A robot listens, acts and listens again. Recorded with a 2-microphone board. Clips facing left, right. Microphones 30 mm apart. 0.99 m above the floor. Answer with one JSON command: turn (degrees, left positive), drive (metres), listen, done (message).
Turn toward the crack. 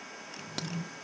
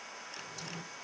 {"turn": 70}
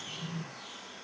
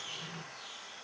{"listen": true}
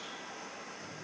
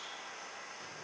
{"done": "I heard a crack, but can't make it out now. It was about straight ahead or 40° left."}